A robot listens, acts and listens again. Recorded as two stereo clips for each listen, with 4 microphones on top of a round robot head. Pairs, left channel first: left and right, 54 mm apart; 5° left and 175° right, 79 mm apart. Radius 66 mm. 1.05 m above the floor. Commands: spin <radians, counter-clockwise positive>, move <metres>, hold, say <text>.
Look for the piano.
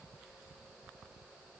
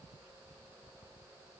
hold
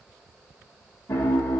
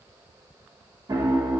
spin 2.44
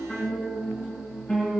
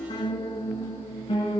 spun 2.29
spin 0.17
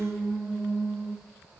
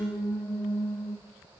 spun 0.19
say Found it: a piano, straight ahead.